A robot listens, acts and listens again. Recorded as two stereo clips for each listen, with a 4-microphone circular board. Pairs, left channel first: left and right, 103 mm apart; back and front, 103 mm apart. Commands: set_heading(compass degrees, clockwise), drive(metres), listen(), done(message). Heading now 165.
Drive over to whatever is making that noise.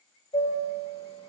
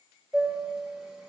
set_heading(80)
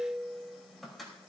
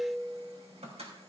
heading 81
drive(1.0)
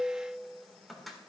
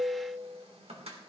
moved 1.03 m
drive(1.0)
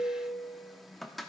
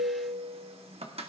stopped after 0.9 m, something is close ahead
done("I am next to the chime.")